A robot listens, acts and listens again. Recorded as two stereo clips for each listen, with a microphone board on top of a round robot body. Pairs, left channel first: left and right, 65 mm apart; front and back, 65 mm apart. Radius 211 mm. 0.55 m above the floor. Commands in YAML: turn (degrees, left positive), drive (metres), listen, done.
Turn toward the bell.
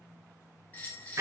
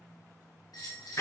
turn: 25
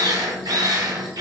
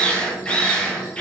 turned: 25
listen: true
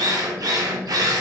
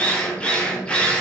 listen: true
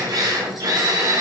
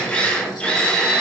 done: "Facing where the bell came from. I can't hear it now."